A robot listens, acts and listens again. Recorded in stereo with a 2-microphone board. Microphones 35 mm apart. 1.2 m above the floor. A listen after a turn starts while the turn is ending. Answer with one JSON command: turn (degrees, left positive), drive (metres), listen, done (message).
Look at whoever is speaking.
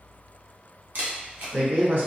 {"turn": -70}
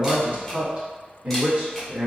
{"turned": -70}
{"turn": -35}
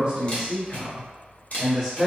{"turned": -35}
{"done": "Found it: a man speaking, straight ahead, 1 to 2 m away."}